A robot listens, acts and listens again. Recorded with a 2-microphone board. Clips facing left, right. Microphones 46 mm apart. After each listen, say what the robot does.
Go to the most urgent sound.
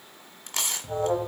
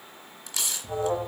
Turn 20° left.
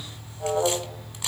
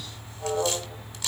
Turn 140° left.
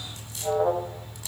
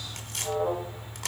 Turn 55° left.
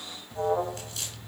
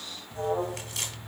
Drive 1.0 m forward.
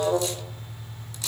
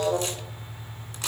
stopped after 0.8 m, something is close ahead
Turn 10° left.
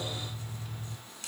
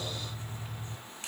I am next to the alarm.